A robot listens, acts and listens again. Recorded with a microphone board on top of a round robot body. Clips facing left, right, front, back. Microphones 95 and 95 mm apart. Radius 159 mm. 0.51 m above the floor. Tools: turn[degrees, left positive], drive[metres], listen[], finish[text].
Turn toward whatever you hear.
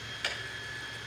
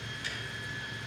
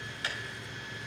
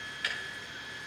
Thought: The ticking: 60° left.
Action: turn[60]
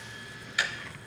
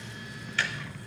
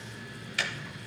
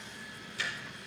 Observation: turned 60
Thought: The ticking is now 10° left.
Action: turn[10]
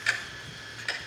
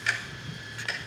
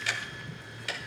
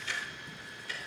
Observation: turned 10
Action: finish[Facing the ticking, under 1 m away.]